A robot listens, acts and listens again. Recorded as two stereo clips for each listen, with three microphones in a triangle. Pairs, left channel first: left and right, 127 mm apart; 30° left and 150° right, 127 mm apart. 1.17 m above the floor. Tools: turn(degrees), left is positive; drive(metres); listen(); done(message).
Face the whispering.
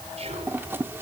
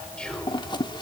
turn(degrees=-55)
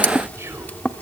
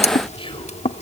turn(degrees=-20)
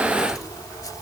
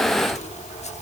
listen()
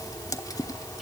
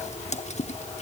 listen()
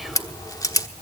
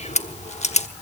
done("I heard whispering from this way, but can't make it out now.")